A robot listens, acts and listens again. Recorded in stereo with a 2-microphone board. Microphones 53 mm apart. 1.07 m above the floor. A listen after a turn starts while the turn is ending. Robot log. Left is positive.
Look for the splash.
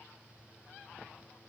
cmd idle
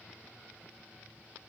cmd idle
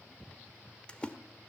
note: The splash: about 20° left or 160° left.
cmd yaw +20
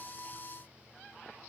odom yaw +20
cmd idle
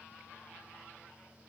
end: I heard a splash, but can't make it out now. It was about straight ahead or 140° left.